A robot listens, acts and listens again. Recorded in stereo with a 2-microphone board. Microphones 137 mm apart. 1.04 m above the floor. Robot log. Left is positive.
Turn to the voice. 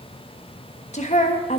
note: The woman speaking: about 55° left or 125° left.
cmd yaw +55
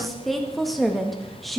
end: Facing the woman speaking.